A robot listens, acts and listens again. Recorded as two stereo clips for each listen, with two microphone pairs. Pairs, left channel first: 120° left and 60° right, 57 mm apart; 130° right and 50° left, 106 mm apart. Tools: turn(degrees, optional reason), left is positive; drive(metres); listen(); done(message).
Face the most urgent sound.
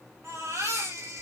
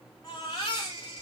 turn(degrees=-80, reason="The baby crying: 80° right.")
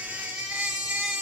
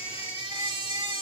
turn(degrees=10, reason="The baby crying is now 10° left.")
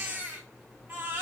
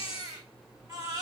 done("Facing the baby crying.")